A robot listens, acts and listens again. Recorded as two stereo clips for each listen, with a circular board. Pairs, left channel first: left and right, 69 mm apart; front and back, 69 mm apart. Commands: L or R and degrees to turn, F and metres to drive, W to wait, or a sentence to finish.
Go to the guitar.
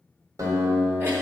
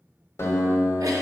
R50
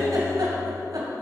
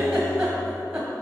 W
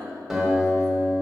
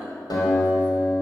F1.0
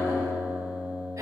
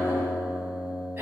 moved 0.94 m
R10
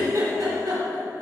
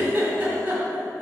W
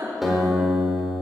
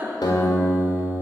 F1.0
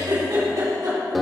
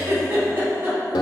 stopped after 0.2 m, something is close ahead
I am next to the guitar.